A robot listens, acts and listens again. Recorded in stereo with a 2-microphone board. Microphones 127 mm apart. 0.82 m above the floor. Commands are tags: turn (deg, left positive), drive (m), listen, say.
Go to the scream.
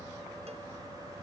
<listen/>
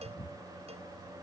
<listen/>
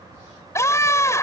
<turn deg="20"/>
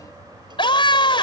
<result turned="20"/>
<turn deg="140"/>
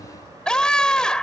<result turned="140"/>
<drive m="1.0"/>
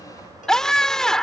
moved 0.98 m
<drive m="1.0"/>
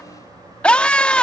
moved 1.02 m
<turn deg="10"/>
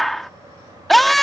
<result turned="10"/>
<drive m="1.0"/>
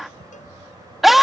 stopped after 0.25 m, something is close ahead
<say>I am next to the scream.</say>